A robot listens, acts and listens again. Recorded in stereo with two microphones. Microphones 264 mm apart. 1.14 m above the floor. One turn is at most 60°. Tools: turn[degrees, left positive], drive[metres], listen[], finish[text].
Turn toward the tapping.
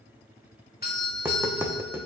Action: turn[-30]
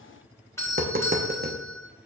Thought: So it is at 140° right.
Action: turn[-60]
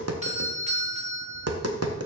Thought: The tapping is now 100° right.
Action: turn[-60]
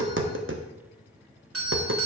Thought: The tapping is now 55° right.
Action: turn[-55]
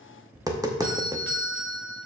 Thought: The tapping is now 15° right.
Action: turn[-15]
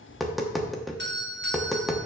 Action: finish[Facing the tapping, under 1 m away.]